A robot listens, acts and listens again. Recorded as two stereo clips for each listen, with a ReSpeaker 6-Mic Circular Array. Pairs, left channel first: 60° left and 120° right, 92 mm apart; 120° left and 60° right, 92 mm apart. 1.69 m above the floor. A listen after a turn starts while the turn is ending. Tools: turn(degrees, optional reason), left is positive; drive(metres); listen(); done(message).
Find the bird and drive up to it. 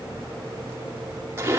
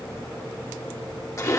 listen()
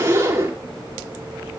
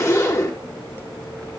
listen()
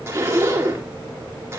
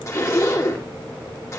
done("I can't make out a bird, only a zipper.")